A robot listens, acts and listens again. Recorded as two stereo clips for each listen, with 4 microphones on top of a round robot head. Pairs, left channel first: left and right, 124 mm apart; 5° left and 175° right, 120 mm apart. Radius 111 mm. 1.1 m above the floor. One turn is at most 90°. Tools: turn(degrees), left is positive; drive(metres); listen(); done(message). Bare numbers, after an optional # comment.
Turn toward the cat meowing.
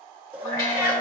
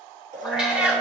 # The cat meowing: 110° left.
turn(90)
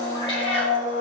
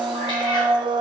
# Nothing new. It was at 20° left.
turn(20)
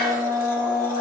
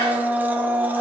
listen()
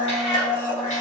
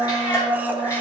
# The cat meowing is now 60° left.
turn(60)
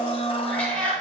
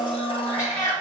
# The cat meowing is now 10° left.
turn(10)
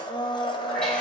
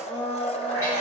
listen()
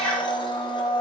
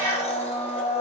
done("Found it: a cat meowing, straight ahead.")